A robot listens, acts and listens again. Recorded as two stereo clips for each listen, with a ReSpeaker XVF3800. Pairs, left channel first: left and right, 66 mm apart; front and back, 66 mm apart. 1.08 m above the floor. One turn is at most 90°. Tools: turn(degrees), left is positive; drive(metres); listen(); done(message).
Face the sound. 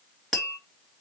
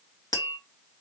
turn(degrees=10)
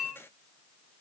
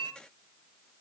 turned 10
done("Found it: tapping, straight ahead, 1 to 2 m away.")